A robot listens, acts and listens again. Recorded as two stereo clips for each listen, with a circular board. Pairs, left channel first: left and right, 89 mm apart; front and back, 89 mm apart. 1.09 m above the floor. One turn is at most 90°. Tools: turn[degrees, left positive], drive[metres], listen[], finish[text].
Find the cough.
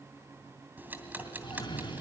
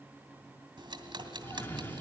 Thought: The cough: 65° left.
Action: turn[65]
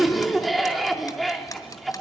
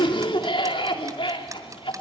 Action: finish[Found it: a cough, straight ahead, 2 to 4 m away.]